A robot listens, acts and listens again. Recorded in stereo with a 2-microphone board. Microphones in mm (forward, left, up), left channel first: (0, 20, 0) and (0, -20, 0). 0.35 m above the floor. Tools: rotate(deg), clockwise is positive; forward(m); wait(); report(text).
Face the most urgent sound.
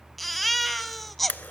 rotate(-30)
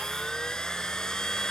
wait()
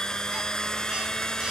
wait()
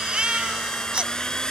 rotate(25)
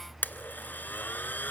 wait()
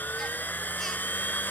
wait()
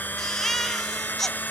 rotate(-10)
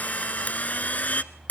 wait()
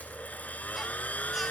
wait()
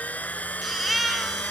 report("Found it: a baby crying, straight ahead, under 1 m away.")